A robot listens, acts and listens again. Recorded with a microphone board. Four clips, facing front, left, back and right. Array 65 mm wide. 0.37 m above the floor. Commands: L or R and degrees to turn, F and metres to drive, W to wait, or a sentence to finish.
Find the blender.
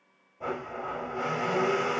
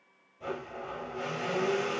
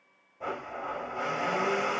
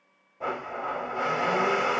R90
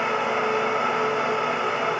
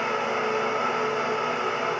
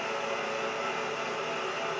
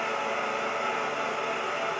L15
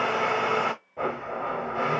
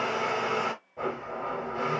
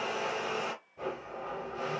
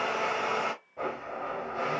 Found it: a blender, straight ahead, under 1 m away.